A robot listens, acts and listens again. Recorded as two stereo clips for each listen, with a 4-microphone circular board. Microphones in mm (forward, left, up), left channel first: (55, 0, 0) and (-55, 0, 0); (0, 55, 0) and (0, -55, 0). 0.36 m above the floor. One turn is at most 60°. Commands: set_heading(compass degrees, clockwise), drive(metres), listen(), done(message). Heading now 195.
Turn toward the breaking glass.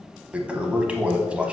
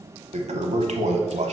listen()
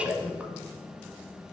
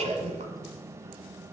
listen()
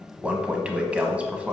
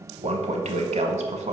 done("I can't make out breaking glass to turn to.")